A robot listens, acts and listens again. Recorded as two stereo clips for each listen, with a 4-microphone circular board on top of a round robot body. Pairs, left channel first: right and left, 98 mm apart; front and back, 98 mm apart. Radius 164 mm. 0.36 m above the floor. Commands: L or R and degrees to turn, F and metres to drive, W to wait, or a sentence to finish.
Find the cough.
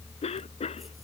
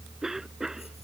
R95
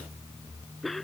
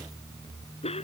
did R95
Found it: a cough, straight ahead.